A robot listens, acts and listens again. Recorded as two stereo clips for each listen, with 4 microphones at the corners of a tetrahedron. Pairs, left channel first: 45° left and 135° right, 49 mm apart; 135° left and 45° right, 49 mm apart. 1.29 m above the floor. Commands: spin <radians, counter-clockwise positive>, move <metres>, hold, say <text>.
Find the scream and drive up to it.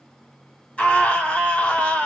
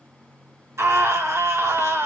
spin -0.35
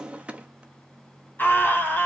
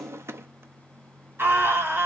move 1.0
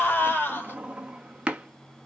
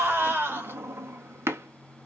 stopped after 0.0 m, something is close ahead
say Blocked. The scream is further on, straight ahead.